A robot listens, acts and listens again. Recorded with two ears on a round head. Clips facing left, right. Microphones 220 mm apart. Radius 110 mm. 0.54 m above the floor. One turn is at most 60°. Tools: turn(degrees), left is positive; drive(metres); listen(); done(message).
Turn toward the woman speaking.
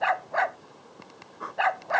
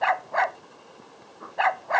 listen()
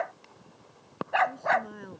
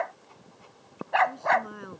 turn(degrees=-30)
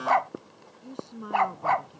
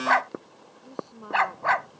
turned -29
turn(degrees=25)
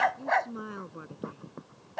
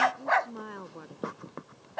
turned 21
turn(degrees=10)
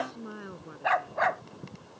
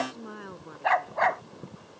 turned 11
done("Facing the woman speaking.")